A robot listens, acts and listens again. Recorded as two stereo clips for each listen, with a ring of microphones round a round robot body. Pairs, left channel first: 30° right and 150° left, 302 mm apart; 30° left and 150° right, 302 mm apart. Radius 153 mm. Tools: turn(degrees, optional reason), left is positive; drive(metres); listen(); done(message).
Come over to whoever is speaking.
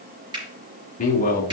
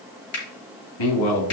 turn(degrees=35, reason="The man speaking: 35° left.")
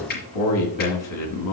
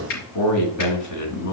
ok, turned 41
drive(metres=1.0)
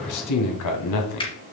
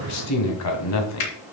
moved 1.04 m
drive(metres=1.0)
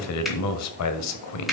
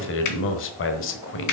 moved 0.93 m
turn(degrees=-10, reason="The man speaking is now 10° right.")
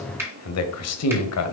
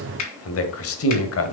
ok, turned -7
drive(metres=1.0)
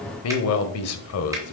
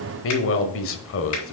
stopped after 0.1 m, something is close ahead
done("Arrived at the man speaking, straight ahead.")